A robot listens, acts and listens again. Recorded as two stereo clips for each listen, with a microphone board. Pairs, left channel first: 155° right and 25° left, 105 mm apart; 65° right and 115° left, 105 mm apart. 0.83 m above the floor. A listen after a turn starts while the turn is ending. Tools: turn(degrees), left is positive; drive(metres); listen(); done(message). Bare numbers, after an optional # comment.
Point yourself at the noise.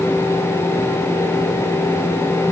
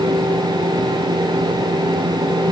listen()
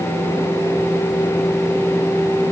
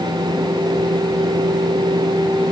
listen()
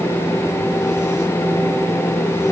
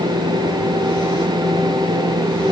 done("I can't make out anything.")